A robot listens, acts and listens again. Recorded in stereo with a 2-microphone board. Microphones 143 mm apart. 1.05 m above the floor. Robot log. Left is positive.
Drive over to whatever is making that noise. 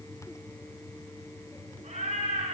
note: The cat meowing: about 50° right or 130° right.
cmd yaw -50
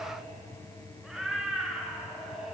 cmd fwd 1.0
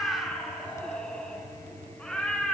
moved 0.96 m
cmd fwd 1.0
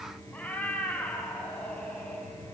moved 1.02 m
note: The cat meowing is now 10° left.
cmd yaw +10
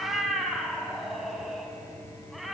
cmd fwd 1.0
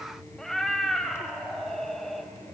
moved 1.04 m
cmd fwd 1.0
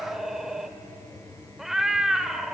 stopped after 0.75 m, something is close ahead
end: I am next to the cat meowing.